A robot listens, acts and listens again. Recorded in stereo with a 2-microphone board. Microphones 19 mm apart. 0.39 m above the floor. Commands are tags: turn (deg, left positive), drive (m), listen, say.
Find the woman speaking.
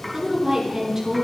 <turn deg="-30"/>
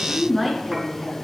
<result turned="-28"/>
<say>Facing the woman speaking, over 4 m away.</say>